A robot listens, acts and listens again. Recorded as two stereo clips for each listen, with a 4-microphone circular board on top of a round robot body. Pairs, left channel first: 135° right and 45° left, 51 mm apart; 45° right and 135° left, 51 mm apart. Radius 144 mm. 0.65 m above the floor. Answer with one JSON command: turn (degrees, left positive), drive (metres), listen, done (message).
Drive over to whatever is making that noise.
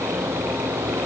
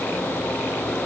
{"listen": true}
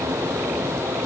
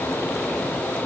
{"listen": true}
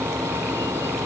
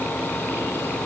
{"done": "I can't make out anything to turn to."}